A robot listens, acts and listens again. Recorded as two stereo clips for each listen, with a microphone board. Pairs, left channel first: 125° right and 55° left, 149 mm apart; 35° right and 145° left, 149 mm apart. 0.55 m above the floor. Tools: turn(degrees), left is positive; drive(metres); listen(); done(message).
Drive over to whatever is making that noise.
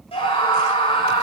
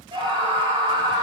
turn(degrees=-165)
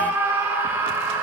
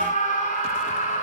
turn(degrees=-20)
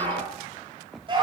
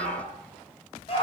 drive(metres=1.0)
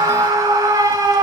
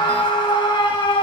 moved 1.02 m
drive(metres=1.0)
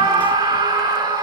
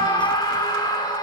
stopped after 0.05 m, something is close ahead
turn(degrees=10)
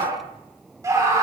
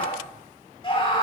done("Arrived at the scream, straight ahead.")